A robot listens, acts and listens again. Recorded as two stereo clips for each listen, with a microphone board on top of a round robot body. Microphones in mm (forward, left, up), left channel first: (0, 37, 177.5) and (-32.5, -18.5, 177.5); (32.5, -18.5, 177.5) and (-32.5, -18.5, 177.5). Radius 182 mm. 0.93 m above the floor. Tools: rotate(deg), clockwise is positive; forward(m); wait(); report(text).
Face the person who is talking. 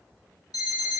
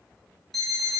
wait()
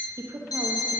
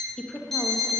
rotate(80)
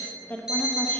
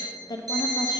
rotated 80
rotate(10)
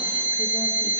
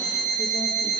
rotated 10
wait()
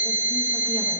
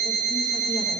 wait()
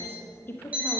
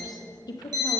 report("Found it: a woman speaking, straight ahead, 1 to 2 m away.")